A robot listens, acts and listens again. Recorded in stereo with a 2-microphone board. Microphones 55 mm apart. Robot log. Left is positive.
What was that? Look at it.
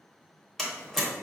cmd yaw +30
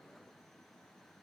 cmd idle
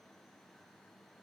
end: I heard a door slam, but can't make it out now. It was about 25° right or 145° left.